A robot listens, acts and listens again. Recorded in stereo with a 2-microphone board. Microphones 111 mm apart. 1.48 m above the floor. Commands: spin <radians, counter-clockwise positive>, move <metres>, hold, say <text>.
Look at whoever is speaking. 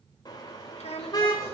spin 1.22
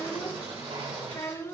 spin 0.44
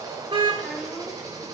hold
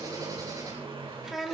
say Facing the child speaking, 2 to 4 m away.